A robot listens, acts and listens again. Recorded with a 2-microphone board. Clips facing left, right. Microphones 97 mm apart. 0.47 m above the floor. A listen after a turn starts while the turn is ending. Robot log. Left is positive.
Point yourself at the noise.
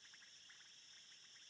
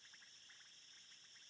cmd idle
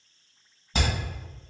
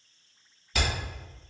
note: The hammering: about 30° left or 150° left.
cmd yaw +30
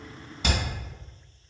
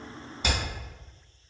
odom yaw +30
cmd idle
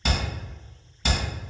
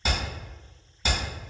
end: Found it: hammering, straight ahead.